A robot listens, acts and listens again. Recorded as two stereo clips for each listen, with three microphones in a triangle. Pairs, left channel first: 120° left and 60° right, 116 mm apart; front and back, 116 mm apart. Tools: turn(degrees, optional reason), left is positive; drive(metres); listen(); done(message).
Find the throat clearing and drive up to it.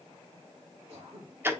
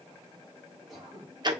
turn(degrees=-90, reason="The throat clearing: 90° right.")
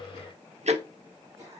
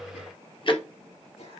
drive(metres=1.0)
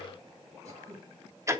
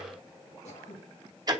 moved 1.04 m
drive(metres=1.0)
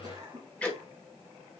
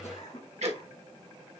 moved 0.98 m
drive(metres=1.0)
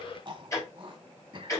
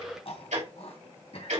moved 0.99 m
turn(degrees=-20, reason="The throat clearing is now 20° right.")
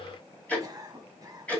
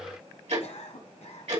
drive(metres=1.0)
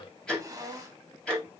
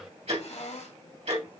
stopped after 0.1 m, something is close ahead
done("Arrived at the throat clearing, straight ahead.")